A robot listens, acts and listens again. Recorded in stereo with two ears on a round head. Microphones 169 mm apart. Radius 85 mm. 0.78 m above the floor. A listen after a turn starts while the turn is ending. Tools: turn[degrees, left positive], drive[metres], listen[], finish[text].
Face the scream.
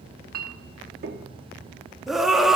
Action: turn[30]
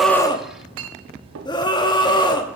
Thought: So it is at 155° left.
Action: turn[155]
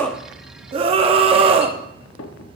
Thought: The scream is now 35° right.
Action: turn[-35]
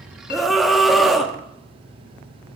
Action: finish[Facing the scream.]